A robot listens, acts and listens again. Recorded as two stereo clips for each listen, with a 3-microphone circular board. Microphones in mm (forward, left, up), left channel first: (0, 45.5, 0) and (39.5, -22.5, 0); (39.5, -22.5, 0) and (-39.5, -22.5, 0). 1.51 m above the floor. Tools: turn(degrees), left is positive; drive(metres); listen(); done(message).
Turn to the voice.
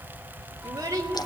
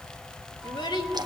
turn(degrees=-10)
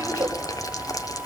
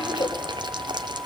done("Facing the child speaking.")